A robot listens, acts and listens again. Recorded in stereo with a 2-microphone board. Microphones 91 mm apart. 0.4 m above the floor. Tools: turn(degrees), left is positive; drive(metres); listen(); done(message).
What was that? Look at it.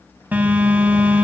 turn(degrees=-20)
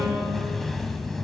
done("Found it: a phone buzzing, straight ahead.")